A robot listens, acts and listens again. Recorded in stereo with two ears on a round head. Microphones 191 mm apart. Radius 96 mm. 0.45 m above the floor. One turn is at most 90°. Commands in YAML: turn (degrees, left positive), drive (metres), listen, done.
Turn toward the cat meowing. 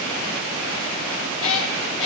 turn: 65
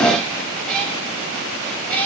done: "Found it: a cat meowing, straight ahead."